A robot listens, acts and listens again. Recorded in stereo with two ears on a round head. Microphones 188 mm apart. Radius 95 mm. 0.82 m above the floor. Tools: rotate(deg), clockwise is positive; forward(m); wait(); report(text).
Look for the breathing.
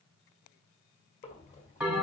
rotate(-35)
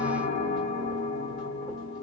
wait()
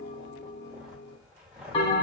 report("Found it: breathing, straight ahead.")